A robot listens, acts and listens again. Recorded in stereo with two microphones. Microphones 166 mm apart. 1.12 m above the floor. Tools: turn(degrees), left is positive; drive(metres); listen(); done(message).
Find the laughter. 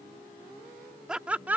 turn(degrees=-30)
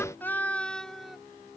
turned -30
turn(degrees=30)
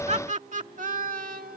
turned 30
turn(degrees=-60)
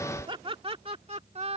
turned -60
turn(degrees=-40)
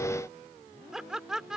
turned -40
done("Facing the laughter.")